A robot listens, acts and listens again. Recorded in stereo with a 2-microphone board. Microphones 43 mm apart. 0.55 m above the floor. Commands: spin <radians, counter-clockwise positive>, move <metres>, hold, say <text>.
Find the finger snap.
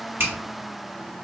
spin -1.13
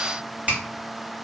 spin -0.61
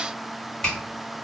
spin 0.35
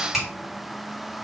say Facing the finger snap.